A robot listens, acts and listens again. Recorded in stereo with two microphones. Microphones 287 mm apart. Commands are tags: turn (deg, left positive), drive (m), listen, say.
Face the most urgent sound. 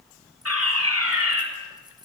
<turn deg="-50"/>
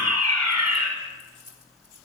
<turn deg="-75"/>
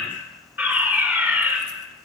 <say>Facing the fire alarm.</say>